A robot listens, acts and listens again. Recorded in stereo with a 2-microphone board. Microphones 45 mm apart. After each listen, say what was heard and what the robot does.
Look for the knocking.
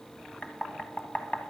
The knocking: about 35° left or 145° left. Turn 35° left.
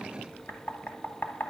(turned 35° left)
So it is at 105° left. Turn 105° left.
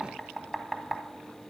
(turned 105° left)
Facing the knocking.